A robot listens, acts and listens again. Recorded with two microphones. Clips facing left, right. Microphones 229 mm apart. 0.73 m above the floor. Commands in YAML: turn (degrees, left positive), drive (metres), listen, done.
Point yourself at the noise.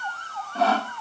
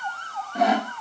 turn: -15
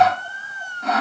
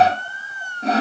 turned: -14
turn: -150
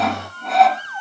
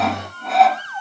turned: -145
done: "Found it: sawing, straight ahead."